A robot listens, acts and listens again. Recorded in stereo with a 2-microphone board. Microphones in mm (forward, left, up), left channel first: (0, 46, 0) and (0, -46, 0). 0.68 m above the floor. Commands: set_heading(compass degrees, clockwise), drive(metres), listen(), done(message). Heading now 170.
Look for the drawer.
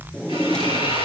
set_heading(140)
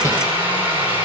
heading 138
listen()
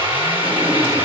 listen()
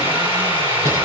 done("I heard a drawer, but can't make it out now. It was about 30° right or 150° left.")